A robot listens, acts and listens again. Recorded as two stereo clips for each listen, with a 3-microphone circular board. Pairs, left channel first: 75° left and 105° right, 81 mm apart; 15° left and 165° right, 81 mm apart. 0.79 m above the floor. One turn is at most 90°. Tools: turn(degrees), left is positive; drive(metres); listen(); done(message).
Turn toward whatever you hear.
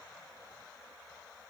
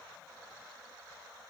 listen()
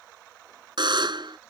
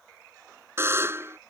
turn(degrees=-90)
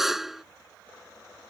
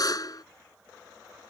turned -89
turn(degrees=-20)
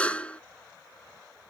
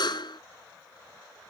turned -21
done("Facing the buzzer.")